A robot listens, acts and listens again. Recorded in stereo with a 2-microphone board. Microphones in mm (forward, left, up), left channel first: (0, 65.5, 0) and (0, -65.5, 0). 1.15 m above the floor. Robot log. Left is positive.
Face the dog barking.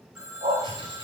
note: The dog barking: about 65° right or 115° right.
cmd yaw -65
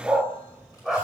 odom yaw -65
end: Found it: a dog barking, straight ahead, 1 to 2 m away.